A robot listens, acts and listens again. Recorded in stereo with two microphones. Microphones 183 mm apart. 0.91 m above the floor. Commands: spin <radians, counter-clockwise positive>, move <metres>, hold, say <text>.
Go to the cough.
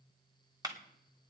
hold
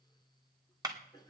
spin 0.35
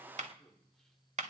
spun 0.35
move 1.0
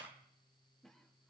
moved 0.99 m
move 1.0
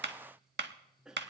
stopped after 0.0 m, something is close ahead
say I am next to the cough.